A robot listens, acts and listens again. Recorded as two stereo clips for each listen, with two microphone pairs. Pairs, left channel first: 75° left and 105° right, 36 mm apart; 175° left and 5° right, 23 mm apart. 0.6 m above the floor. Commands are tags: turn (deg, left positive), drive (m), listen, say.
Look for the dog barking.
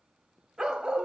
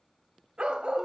<turn deg="-40"/>
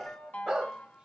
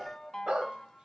<turn deg="-35"/>
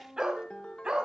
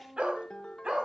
<turn deg="-45"/>
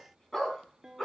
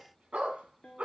<say>Facing the dog barking, 2 to 4 m away.</say>